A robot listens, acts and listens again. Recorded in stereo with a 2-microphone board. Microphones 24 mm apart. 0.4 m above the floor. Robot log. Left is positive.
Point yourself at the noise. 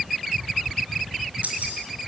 note: The keys jangling: about 70° right or 110° right.
cmd yaw -70
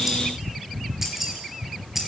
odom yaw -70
end: Found it: keys jangling, straight ahead, over 4 m away.